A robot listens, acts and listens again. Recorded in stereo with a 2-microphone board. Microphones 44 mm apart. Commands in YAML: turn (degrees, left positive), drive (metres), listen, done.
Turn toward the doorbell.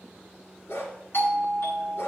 turn: 55
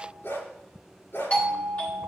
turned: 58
turn: 35
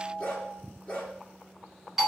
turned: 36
done: "Facing the doorbell, 1 to 2 m away."